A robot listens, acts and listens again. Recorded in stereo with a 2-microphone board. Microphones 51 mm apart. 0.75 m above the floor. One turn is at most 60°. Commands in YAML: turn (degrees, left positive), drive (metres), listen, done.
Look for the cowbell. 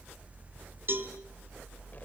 turn: -50
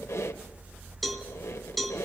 done: "Found it: a cowbell, straight ahead."